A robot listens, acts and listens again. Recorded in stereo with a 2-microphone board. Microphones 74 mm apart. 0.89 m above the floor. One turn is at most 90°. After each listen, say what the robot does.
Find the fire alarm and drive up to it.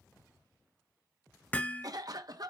Keep listening.
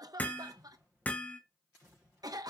Keep listening.
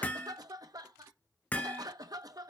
I can't make out a fire alarm, only a cough and hammering.